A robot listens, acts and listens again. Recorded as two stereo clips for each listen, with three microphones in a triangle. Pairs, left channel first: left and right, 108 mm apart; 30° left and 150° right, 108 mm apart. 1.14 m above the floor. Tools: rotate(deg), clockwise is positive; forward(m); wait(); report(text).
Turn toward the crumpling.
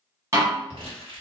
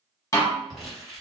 rotate(60)
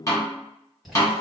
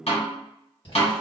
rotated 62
report("Found it: crumpling, straight ahead, 1 to 2 m away.")